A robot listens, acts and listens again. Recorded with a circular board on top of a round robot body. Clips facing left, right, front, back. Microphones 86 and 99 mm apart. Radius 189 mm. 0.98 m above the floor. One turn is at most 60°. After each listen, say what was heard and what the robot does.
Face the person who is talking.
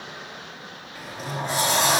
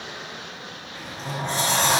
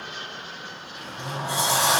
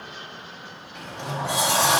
Keep listening.
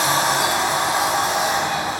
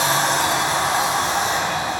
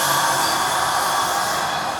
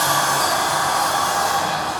Keep listening.
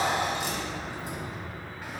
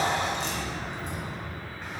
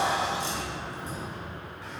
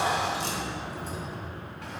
I can't make out anyone speaking, only a sliding door.